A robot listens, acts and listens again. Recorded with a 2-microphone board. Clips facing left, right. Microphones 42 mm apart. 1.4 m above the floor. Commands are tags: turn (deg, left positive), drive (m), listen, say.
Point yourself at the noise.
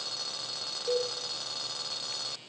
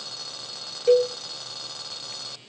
<turn deg="-55"/>
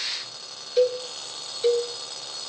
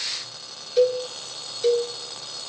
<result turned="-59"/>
<say>Found it: a cowbell, straight ahead.</say>